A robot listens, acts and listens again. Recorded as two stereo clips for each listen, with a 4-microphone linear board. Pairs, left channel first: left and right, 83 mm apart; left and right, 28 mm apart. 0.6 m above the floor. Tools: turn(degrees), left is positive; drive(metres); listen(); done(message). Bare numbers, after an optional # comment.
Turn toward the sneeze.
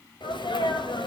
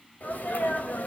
# The sneeze: about 75° left or 105° left.
turn(75)
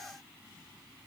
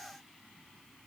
listen()
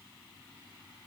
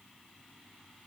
done("I heard a sneeze, but can't make it out now. It was about straight ahead or 30° left.")